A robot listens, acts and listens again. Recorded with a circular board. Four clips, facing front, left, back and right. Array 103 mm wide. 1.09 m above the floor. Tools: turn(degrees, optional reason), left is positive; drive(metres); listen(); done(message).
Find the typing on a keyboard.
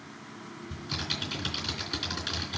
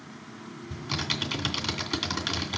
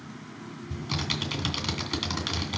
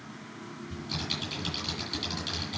turn(degrees=125, reason="The typing on a keyboard: 125° left.")
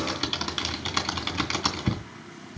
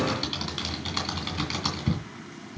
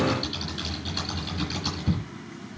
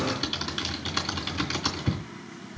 done("Found it: typing on a keyboard, straight ahead.")